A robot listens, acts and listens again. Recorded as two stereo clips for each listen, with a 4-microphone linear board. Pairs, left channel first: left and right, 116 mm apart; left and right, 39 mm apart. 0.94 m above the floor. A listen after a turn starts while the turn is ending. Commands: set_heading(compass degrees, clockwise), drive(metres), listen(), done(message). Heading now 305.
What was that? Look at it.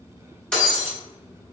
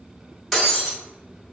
set_heading(275)
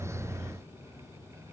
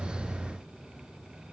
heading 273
listen()
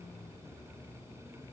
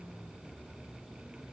done("I heard breaking glass, but can't make it out now. It was about 25° right or 140° left.")